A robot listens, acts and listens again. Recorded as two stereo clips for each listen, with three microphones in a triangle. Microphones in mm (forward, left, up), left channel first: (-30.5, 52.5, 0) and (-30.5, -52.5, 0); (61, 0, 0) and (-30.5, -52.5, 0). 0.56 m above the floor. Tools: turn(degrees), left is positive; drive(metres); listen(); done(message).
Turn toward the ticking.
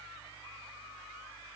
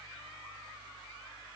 listen()
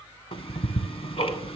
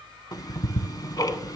turn(degrees=75)
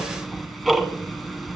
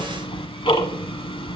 done("Facing the ticking.")